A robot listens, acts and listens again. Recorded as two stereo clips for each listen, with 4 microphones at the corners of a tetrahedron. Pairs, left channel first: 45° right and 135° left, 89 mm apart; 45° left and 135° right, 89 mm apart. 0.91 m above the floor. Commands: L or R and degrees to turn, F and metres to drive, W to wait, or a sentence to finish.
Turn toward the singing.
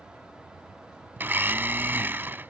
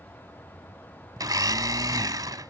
W
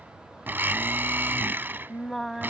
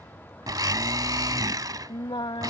L45
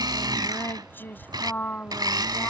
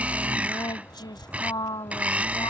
L25
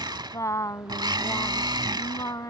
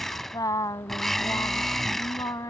Facing the singing.